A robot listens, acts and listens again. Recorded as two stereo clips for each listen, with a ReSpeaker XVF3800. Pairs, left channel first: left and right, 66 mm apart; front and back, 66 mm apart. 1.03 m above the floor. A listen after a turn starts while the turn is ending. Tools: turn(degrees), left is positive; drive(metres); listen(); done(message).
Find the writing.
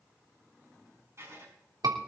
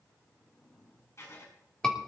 turn(degrees=-45)
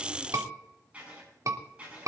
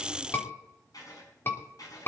turn(degrees=-20)
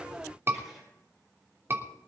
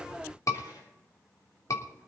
listen()
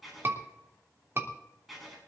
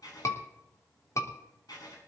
done("Found it: writing, straight ahead.")